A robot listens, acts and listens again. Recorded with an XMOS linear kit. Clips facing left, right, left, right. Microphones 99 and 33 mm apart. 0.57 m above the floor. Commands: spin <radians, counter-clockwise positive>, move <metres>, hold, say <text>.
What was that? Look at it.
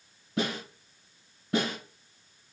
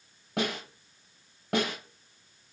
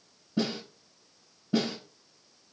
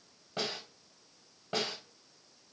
spin -1.31
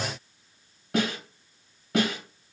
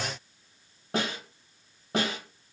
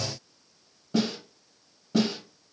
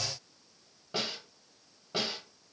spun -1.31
spin -0.61
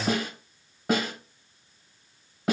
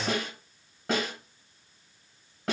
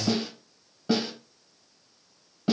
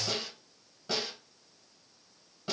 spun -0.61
say Found it: a snare drum, straight ahead.